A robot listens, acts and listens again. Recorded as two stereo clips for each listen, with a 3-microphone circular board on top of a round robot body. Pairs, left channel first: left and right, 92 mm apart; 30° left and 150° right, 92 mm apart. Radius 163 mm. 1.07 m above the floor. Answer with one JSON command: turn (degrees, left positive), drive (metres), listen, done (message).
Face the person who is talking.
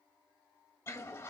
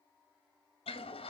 {"listen": true}
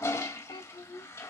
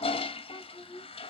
{"turn": 70}
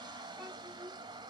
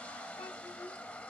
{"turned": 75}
{"listen": true}
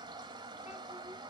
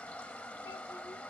{"listen": true}
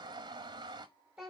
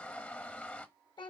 {"done": "Found it: a child speaking, straight ahead, 1 to 2 m away."}